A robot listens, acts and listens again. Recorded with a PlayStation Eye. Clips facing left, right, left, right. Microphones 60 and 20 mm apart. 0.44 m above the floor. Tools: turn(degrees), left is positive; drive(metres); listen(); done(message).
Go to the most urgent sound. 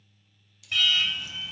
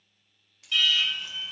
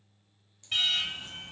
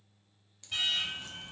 turn(degrees=55)
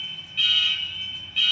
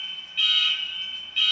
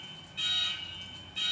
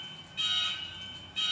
drive(metres=1.0)
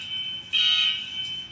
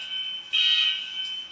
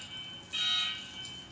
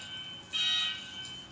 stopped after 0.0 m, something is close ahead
done("Blocked. The alarm is further on, straight ahead.")